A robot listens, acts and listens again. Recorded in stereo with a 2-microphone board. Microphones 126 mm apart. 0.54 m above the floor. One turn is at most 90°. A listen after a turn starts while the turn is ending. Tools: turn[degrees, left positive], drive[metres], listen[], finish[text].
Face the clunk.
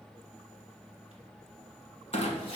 Thought: The clunk: about 60° left or 120° left.
Action: turn[60]
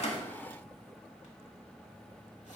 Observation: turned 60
Action: listen[]
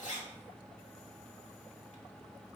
Action: finish[I heard a clunk, but can't make it out now. It was about straight ahead or 60° left.]